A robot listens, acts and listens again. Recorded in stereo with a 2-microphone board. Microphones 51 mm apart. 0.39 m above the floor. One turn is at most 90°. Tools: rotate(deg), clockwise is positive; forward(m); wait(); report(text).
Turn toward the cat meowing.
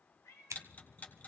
rotate(-90)
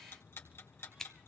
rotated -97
wait()
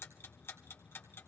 wait()
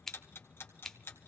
report("Facing where the cat meowing came from. I can't hear it now.")